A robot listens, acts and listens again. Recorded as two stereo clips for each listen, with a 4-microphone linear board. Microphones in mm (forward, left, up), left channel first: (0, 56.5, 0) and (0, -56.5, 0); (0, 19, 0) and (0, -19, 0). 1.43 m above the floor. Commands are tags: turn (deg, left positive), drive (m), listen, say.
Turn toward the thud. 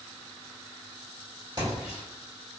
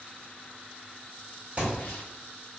<turn deg="-40"/>
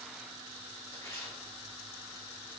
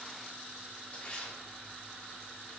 <listen/>
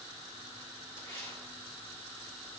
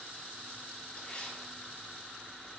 <say>I heard a thud, but can't make it out now. It was about straight ahead or 100° right.</say>